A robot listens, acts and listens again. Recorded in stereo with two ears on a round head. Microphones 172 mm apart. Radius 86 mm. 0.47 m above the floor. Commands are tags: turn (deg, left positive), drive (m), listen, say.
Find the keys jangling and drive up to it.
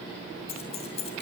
<turn deg="35"/>
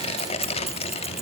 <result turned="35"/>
<listen/>
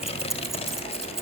<drive m="1.0"/>
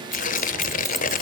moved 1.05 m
<listen/>
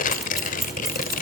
<listen/>
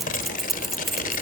<drive m="1.0"/>
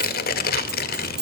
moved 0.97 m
<drive m="1.0"/>
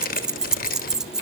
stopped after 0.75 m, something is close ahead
<say>I am next to the keys jangling.</say>